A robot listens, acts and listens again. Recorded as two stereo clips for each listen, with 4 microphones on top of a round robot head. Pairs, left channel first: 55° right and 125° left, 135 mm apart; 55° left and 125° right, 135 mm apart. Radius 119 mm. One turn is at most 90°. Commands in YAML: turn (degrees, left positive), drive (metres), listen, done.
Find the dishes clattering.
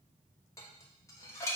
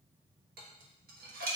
turn: -90
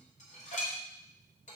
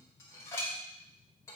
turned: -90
turn: -20
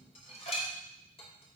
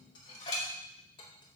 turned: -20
done: "Found it: dishes clattering, straight ahead."